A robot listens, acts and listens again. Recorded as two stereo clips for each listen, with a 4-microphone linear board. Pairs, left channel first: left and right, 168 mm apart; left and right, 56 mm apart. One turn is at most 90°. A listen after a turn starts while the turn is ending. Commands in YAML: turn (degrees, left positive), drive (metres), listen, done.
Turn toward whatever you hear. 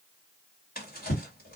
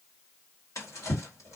turn: 60
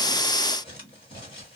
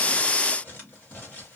turn: 35
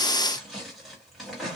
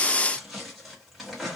done: "Facing the drawer, 1 to 2 m away."